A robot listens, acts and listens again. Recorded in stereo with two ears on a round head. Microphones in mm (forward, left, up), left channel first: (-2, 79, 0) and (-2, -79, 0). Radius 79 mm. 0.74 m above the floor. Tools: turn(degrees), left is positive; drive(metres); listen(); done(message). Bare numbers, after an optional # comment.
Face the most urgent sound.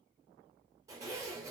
listen()
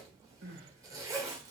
# The crying: about 65° right or 115° right.
turn(-65)
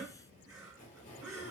done("Facing the crying, 1 to 2 m away.")